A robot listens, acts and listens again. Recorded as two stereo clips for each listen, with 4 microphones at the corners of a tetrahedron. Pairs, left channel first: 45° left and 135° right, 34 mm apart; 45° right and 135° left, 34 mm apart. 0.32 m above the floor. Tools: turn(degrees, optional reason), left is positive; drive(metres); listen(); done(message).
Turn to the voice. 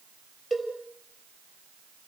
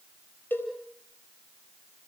listen()
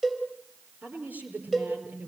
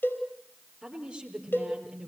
turn(degrees=-160, reason="The woman speaking: 160° right.")
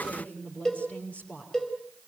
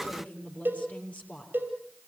done("Found it: a woman speaking, straight ahead.")